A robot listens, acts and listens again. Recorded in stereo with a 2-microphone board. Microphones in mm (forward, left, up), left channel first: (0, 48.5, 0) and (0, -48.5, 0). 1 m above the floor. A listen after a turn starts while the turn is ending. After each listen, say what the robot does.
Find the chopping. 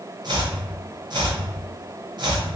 Turn 50° right.
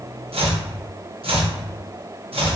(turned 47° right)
Turn 85° right.
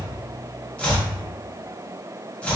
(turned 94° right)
Turn 10° left.
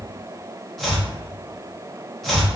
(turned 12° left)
Found it: chopping, straight ahead, under 1 m away.